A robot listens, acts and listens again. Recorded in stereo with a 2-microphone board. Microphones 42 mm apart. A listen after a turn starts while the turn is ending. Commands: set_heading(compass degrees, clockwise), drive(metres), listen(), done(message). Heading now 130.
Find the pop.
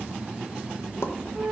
set_heading(40)
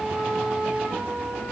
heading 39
done("Facing where the pop came from. I can't hear it now.")